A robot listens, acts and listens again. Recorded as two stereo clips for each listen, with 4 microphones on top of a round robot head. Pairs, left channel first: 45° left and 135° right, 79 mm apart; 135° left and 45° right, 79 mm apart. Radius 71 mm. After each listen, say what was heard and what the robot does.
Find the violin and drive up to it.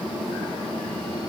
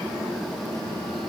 Keep listening.
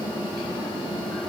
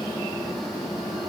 Keep listening.
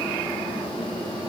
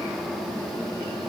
I can't make out a violin to turn to.